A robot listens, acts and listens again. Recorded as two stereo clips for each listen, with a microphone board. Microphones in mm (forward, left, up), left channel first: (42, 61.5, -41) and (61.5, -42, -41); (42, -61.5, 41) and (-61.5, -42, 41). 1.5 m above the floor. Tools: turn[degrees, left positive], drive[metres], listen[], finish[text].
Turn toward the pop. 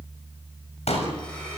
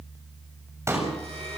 Thought: The pop: 110° left.
Action: turn[110]
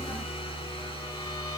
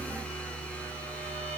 Action: finish[I heard a pop from this way, but can't make it out now.]